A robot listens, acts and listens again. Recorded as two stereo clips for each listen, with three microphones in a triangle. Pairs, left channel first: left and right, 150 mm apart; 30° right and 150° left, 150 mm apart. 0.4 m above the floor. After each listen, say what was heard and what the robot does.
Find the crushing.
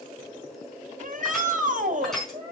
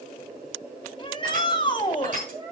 The crushing: straight behind. Turn 180° left.
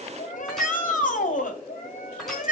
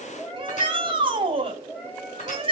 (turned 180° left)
Keep listening.
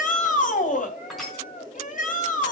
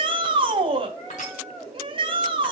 Facing the crushing.